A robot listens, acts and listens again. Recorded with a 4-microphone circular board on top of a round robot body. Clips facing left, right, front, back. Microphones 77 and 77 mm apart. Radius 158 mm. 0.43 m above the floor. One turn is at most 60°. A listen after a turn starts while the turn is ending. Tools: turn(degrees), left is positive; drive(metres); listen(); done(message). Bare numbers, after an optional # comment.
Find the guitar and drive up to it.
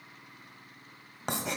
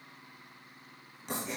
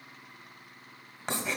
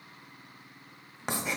listen()
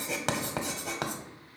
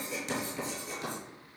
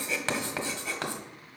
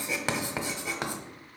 listen()
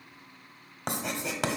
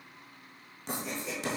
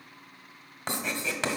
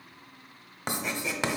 done("I can't make out a guitar, only writing.")